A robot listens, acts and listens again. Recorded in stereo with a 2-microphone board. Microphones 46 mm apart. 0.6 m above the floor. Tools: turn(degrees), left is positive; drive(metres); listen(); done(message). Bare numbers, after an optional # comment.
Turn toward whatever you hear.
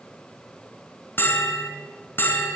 # The bell: about 55° left or 125° left.
turn(55)
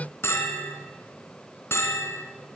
# So it is at 70° left.
turn(70)
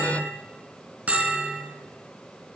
# The bell is now 30° right.
turn(-30)
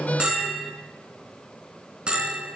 # The bell is now 20° right.
turn(-20)
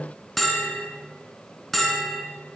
done("Facing the bell, 2 to 4 m away.")